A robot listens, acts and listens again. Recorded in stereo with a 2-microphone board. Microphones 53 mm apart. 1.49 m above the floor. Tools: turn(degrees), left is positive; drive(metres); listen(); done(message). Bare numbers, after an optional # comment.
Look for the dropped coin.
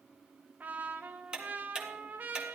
listen()
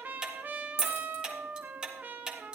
# The dropped coin: about 55° left or 125° left.
turn(55)
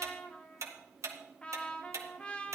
listen()
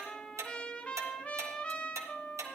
done("I heard a dropped coin, but can't make it out now. It was about straight ahead or 70° left.")